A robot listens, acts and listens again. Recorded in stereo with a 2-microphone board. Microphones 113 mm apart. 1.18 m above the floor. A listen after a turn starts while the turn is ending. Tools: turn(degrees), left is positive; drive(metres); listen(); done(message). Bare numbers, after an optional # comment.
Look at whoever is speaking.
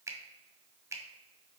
listen()
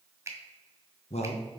# The man speaking: about 65° left or 115° left.
turn(65)
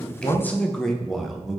done("Facing the man speaking.")